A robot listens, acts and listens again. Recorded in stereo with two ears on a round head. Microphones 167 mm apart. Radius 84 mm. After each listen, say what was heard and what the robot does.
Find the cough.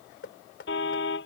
Keep listening.
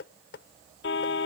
Keep listening.
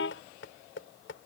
I can't make out a cough to turn to.